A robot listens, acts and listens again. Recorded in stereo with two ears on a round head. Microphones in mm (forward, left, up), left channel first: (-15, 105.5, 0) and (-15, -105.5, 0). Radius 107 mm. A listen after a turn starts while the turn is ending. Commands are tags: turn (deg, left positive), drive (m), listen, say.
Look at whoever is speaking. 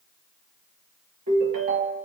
<listen/>
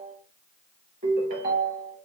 <listen/>
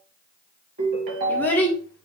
<turn deg="30"/>
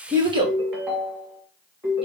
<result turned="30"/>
<turn deg="-25"/>
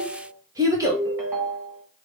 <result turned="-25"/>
<turn deg="-15"/>
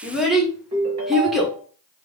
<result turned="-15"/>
<say>Facing the child speaking, 1 to 2 m away.</say>